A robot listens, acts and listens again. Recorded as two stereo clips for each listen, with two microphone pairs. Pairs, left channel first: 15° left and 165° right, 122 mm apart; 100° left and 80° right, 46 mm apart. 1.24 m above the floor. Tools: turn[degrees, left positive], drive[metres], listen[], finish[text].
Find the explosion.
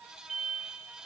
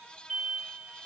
Thought: The explosion: 165° right.
Action: turn[-165]
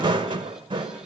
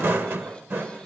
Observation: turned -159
Action: finish[I heard an explosion from this way, but can't make it out now.]